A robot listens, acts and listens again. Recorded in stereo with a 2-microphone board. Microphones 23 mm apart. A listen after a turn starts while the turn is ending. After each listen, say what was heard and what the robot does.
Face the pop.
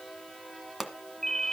Turn 30° right.
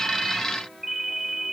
Keep listening.
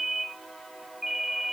I heard a pop, but can't make it out now. It was about 20° left or 140° right.